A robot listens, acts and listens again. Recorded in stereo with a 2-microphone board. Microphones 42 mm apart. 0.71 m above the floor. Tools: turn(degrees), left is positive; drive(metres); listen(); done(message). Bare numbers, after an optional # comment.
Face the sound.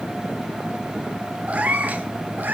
# The cat meowing: about 50° right or 130° right.
turn(-50)
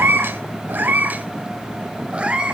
# So it is at 25° right.
turn(-25)
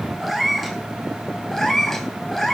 # The cat meowing is now 10° left.
turn(10)
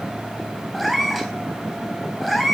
done("Facing the cat meowing.")